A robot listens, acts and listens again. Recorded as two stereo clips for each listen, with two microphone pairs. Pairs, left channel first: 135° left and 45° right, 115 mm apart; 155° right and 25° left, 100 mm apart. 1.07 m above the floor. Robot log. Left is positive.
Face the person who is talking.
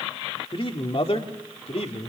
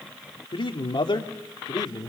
note: The man speaking: 160° left.
cmd yaw +160
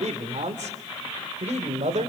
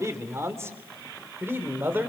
note: The man speaking is now 45° right.
cmd yaw -45
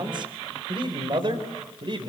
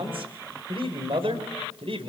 end: Found it: a man speaking, straight ahead.